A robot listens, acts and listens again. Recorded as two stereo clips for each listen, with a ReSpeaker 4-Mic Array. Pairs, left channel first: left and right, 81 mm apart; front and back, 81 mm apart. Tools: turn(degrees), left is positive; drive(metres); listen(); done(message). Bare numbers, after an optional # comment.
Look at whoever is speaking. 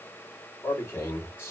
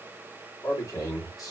# The man speaking: 35° left.
turn(35)
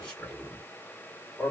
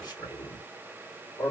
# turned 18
# The man speaking is now 10° left.
turn(10)
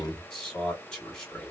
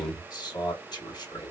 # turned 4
# The man speaking is now 10° left.
turn(10)
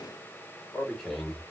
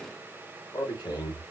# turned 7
done("Facing the man speaking.")